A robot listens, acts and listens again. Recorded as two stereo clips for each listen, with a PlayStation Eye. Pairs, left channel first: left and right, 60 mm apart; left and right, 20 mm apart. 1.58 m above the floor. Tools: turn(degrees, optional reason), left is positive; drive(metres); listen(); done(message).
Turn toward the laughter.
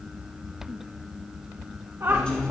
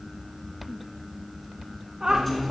turn(degrees=-45, reason="The laughter: about 45° right or 135° right.")
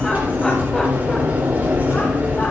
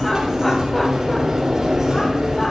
listen()
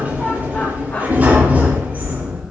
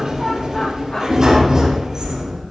listen()
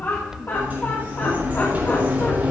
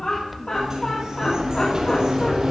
turn(degrees=45, reason="So it is at 45° left.")
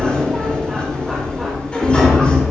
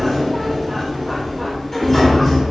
listen()
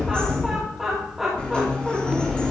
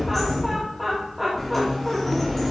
done("Facing the laughter.")